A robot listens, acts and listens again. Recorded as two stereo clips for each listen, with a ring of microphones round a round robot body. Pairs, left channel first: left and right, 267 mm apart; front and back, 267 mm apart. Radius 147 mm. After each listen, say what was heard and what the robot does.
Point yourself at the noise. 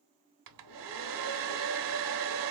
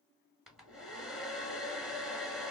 The hair dryer: 90° right. Turn 90° right.
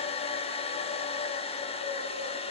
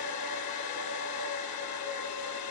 The hair dryer is now 20° left. Turn 20° left.
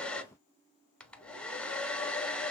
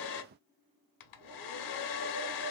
Found it: a hair dryer, straight ahead, under 1 m away.